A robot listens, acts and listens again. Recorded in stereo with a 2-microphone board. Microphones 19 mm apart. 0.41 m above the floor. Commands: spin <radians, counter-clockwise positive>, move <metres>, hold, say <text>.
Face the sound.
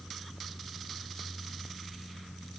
hold
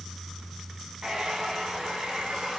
spin -0.70
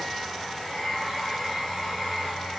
say Facing the hair dryer.